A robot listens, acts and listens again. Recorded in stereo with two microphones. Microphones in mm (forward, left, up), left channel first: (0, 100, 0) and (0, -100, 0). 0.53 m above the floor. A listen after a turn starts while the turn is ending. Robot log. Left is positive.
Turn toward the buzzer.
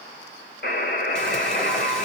note: The buzzer: about 55° left or 125° left.
cmd yaw +55
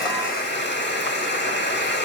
note: So it is at 60° left.
cmd yaw +60
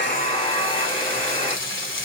note: The buzzer is now 30° left.
cmd yaw +30
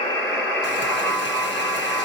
end: Facing the buzzer.